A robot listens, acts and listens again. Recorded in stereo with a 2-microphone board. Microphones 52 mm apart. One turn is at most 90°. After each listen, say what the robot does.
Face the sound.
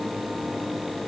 Keep listening.
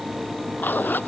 Turn 40° left.
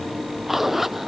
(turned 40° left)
Facing the zipper.